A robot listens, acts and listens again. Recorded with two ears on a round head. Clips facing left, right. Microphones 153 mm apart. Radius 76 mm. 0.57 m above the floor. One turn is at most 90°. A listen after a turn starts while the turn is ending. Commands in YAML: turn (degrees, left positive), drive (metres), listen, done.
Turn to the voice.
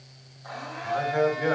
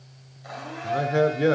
turn: -40
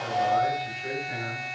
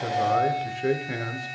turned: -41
turn: -90
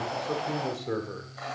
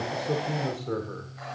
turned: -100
turn: 10
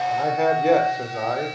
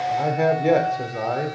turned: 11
done: "Found it: a man speaking, straight ahead, 1 to 2 m away."